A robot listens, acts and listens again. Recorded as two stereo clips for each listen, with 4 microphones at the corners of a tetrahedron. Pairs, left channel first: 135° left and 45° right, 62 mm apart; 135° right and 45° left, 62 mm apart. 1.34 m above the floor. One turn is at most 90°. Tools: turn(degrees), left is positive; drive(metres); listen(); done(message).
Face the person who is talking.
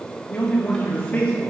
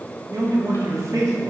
turn(degrees=70)
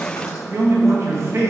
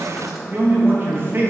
done("Found it: a man speaking, straight ahead, 1 to 2 m away.")